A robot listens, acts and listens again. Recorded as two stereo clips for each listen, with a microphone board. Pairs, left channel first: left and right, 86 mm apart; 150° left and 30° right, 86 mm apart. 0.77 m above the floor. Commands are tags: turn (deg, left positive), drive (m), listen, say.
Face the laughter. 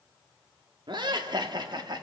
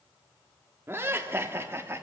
<turn deg="-85"/>
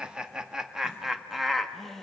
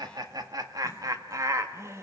<say>Facing the laughter, 1 to 2 m away.</say>